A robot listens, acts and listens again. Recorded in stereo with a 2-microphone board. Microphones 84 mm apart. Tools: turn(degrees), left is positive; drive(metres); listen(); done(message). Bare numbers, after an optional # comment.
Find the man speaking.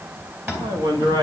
# The man speaking: about 65° right or 115° right.
turn(-65)
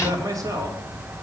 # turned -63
# So it is at 45° right.
turn(-45)
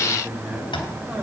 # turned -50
# The man speaking is now 15° right.
turn(-15)
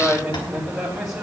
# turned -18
done("Found it: a man speaking, straight ahead.")